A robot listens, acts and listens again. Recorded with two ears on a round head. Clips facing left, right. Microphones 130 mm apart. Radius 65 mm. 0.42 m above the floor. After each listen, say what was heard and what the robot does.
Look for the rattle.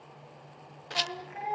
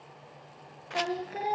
The rattle: about 40° left or 140° left. Turn 40° left.
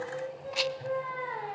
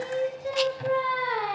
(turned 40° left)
Keep listening.
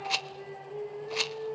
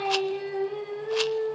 Found it: a rattle, straight ahead.